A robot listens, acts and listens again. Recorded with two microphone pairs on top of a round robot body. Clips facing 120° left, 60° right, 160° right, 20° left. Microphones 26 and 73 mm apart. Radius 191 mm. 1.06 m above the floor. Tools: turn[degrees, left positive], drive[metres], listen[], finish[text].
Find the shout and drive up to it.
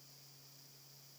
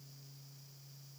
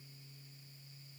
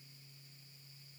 Action: listen[]
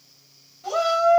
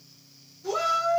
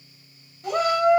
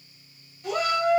Thought: The shout: 155° left.
Action: turn[155]
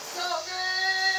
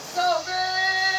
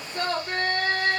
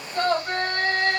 Thought: The shout is now 20° left.
Action: turn[20]
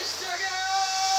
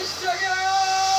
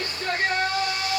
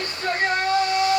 Action: drive[1.0]
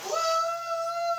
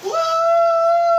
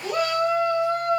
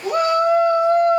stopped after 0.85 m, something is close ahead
Action: finish[Arrived at the shout, straight ahead.]